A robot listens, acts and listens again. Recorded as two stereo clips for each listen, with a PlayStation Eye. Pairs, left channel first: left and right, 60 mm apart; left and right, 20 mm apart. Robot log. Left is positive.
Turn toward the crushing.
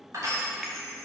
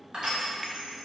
note: The crushing: about 55° right or 125° right.
cmd yaw -55
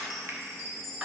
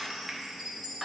note: So it is at 20° right.
cmd yaw -20
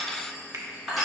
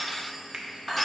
end: Facing the crushing.